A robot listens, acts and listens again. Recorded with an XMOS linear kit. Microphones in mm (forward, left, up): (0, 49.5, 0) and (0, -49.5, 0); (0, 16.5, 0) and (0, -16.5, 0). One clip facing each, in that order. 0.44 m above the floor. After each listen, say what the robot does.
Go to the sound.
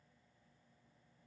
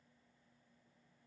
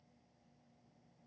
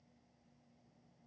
Keep listening.
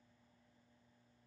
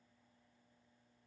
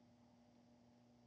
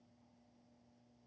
Keep listening.
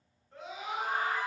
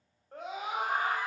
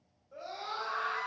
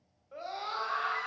Turn 55° right.
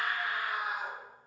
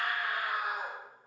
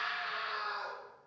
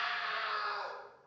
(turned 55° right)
Turn 65° right.
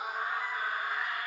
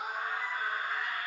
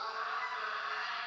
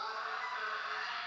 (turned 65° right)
Turn 10° left.
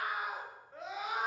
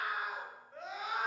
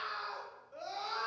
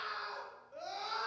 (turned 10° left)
Drive 1.0 m forward.
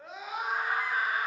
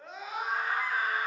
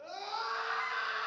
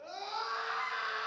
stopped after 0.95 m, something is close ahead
I am next to the scream.